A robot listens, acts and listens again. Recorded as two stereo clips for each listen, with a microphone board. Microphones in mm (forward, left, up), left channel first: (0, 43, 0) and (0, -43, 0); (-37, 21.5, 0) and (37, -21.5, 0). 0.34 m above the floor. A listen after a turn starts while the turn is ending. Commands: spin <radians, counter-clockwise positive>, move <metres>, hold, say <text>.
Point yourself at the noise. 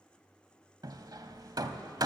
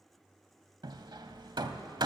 spin -0.96
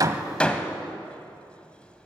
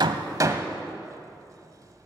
spin 0.26
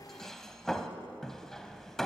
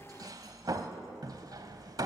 say Facing the hammering.